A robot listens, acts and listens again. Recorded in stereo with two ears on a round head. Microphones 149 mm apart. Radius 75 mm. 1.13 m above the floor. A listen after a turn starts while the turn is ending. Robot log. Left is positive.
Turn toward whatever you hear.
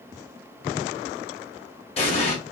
note: The explosion: about 40° left or 140° left.
cmd yaw +40
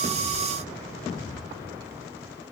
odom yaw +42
cmd idle
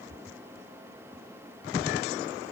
end: I heard an explosion, but can't make it out now. It was about straight ahead or 100° left.